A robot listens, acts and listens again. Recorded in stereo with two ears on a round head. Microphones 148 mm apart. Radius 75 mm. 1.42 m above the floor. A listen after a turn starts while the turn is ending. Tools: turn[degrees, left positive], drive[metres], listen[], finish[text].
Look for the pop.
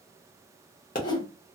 Thought: The pop: about 50° left or 130° left.
Action: turn[50]
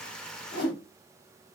Action: listen[]
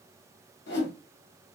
Action: finish[I heard a pop, but can't make it out now. It was about straight ahead or 80° left.]